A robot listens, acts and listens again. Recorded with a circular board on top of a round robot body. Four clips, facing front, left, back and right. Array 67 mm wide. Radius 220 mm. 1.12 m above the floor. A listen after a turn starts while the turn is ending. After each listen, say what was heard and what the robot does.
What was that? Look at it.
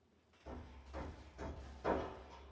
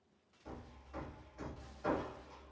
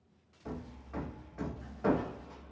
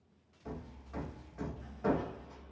The hammering: 160° right. Turn 160° right.
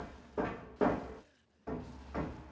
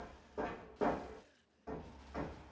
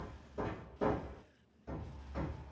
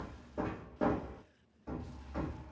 Facing the hammering.